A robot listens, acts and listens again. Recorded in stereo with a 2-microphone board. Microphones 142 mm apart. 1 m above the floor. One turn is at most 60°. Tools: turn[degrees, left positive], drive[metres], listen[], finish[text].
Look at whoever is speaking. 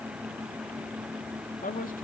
Thought: The man speaking: about 70° left or 110° left.
Action: turn[60]
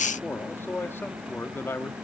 Thought: So it is at 15° left.
Action: turn[15]
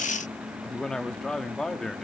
Action: finish[Found it: a man speaking, straight ahead.]